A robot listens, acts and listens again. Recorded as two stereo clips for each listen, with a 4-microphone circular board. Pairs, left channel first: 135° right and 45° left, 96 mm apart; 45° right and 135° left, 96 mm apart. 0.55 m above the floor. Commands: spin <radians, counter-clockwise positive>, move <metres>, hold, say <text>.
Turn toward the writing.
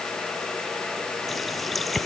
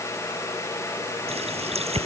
hold
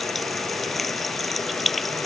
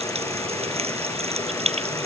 hold
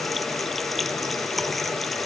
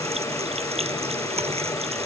say I can't make out writing, only a running tap.